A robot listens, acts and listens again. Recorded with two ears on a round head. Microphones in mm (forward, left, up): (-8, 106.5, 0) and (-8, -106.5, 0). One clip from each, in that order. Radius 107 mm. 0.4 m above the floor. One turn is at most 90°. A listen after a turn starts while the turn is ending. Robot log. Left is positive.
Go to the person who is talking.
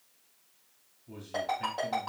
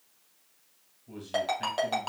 cmd yaw -30
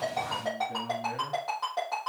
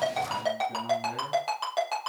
cmd idle
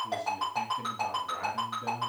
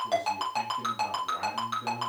note: So it is at 15° left.
cmd yaw +15
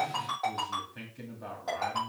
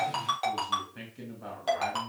cmd fwd 1.0
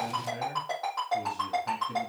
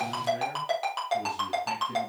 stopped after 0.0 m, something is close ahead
cmd idle
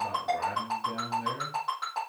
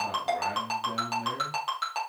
end: Something is in my way. I am facing the man speaking but have not reached it.